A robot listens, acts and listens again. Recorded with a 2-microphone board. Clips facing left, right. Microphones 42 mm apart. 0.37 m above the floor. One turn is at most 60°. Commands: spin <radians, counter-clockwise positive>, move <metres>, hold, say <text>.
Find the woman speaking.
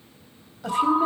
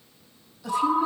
spin 0.96
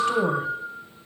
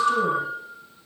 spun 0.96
hold
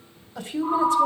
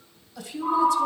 spin 0.87
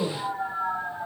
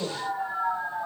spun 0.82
say Found it: a woman speaking, straight ahead, 1 to 2 m away.